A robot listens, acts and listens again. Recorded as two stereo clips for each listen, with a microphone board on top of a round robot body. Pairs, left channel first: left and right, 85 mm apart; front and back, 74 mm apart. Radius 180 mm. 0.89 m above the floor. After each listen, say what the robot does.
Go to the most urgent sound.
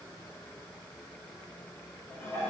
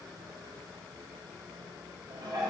Keep listening.
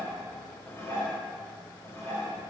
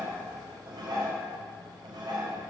Keep listening.
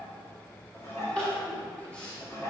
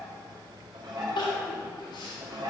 Turn 10° left.
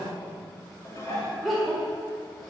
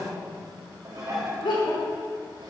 Drive 1.0 m forward.
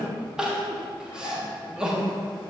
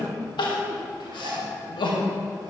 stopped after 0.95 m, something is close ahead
Turn 10° right.
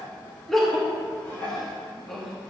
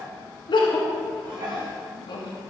I am next to the crying.